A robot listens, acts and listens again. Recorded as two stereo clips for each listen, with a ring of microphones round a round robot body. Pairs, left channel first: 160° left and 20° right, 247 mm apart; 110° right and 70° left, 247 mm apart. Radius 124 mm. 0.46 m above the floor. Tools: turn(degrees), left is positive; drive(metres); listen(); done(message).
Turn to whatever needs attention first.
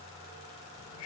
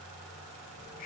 listen()
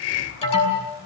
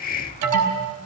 turn(degrees=90)
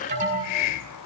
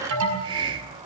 turn(degrees=40)
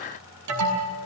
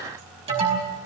done("Facing the alarm, over 4 m away.")